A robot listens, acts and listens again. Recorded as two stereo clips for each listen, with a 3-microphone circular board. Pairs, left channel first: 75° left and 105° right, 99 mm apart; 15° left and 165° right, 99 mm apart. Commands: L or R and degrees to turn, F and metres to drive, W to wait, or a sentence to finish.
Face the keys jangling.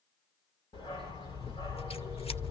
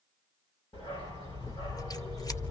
W
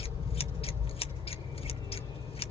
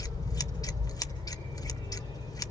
W
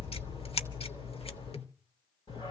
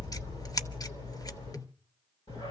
I can't make out keys jangling to turn to.